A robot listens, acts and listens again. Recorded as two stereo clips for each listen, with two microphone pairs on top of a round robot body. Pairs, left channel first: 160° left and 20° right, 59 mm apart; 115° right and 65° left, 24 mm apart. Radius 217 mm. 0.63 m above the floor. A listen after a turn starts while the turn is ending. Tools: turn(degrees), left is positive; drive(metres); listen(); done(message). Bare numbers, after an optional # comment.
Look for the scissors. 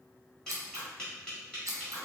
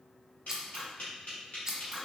done("Facing the scissors.")